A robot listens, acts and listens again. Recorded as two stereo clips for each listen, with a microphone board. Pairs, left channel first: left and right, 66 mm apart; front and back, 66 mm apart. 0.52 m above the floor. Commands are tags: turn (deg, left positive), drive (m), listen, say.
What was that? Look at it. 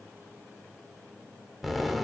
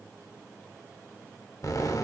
<say>Found it: an explosion, straight ahead, under 1 m away.</say>